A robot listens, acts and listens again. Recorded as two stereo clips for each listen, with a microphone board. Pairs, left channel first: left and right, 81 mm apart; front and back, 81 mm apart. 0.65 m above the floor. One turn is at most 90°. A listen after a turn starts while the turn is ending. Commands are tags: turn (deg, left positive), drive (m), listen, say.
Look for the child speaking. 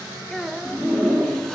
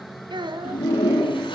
<turn deg="90"/>
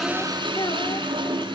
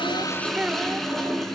<turn deg="90"/>
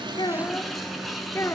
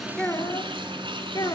<turn deg="40"/>
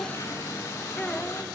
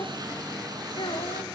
<turn deg="15"/>
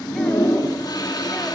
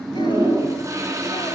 <listen/>
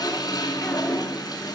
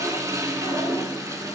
<listen/>
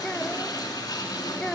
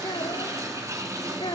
<turn deg="10"/>
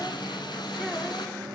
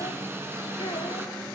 <listen/>
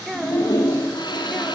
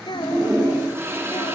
<say>Found it: a child speaking, straight ahead, 2 to 4 m away.</say>